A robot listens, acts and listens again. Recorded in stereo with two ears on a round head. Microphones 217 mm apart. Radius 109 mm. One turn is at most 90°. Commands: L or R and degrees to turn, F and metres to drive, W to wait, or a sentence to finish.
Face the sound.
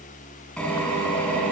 L30
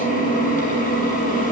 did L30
L90
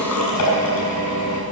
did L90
L80
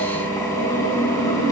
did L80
L15
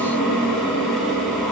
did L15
Found it: a drill, straight ahead, over 4 m away.